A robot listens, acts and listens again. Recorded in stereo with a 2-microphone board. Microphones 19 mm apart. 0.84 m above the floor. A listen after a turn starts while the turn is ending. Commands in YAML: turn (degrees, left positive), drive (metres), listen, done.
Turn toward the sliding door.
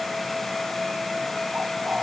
listen: true
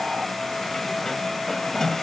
turn: 20
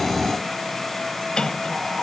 turn: 140
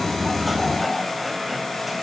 listen: true
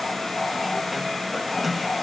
done: "Found it: a sliding door, straight ahead."